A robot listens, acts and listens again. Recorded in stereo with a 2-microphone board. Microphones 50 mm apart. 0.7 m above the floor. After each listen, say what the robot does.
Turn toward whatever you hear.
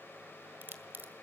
Turn 40° right.
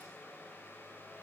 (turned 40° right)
Keep listening.
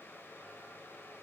I heard a crack, but can't make it out now. It was about straight ahead or 100° right.